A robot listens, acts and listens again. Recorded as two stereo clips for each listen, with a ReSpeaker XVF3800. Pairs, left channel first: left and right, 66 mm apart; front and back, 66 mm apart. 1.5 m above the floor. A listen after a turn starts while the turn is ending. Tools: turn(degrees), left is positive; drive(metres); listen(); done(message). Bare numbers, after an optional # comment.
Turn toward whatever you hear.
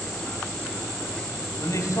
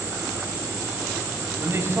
# The man speaking: 125° left.
turn(125)
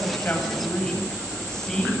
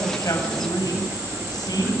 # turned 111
# The man speaking is now 10° left.
turn(10)
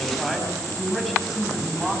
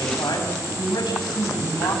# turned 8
done("Found it: a man speaking, straight ahead.")